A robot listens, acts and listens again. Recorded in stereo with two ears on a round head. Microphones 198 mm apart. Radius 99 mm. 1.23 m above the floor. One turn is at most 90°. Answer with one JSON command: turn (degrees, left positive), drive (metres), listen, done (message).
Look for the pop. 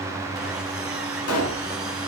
{"turn": 90}
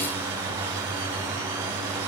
{"done": "I heard a pop from this way, but can't make it out now."}